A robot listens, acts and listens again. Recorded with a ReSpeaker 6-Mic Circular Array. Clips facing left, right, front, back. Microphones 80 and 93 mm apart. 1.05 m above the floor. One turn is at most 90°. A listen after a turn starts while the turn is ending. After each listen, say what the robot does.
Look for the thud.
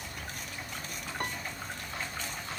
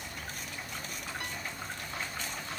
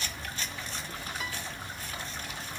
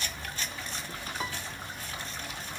Keep listening.
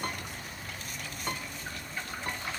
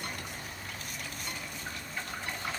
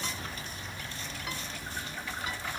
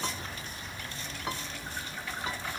Keep listening.
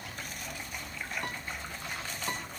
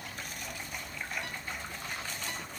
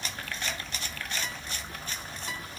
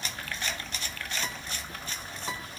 I can't make out a thud to turn to.